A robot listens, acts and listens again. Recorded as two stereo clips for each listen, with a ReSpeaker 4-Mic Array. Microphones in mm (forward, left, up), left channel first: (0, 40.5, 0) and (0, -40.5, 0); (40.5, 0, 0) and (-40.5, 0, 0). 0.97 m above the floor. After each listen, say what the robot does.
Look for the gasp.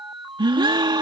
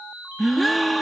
Turn 90° right.
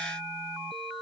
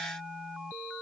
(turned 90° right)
I heard a gasp from this way, but can't make it out now.